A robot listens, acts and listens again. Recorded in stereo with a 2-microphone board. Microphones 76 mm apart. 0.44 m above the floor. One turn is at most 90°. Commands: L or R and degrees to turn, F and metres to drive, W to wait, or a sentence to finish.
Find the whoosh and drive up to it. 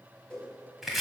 L30
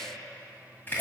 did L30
W
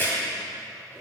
W
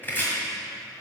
I heard a whoosh, but can't make it out now. It was about 20° right or 140° left. I did not reach it.